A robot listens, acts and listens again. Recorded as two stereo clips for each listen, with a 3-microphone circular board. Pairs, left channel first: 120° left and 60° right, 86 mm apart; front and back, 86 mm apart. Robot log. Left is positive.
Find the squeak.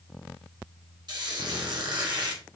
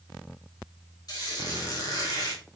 note: The squeak: 35° right.
cmd yaw -35
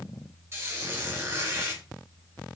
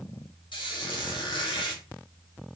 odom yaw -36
end: Found it: a squeak, straight ahead, 1 to 2 m away.